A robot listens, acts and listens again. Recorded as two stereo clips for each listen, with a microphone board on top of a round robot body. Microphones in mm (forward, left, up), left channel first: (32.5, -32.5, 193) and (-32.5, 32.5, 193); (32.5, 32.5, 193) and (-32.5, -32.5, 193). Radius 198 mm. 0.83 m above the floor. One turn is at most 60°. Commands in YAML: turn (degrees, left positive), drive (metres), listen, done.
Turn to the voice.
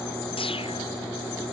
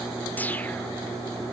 listen: true
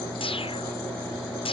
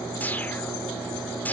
listen: true
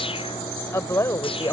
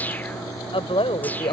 turn: 15
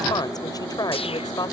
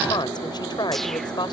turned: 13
done: "Found it: a woman speaking, straight ahead."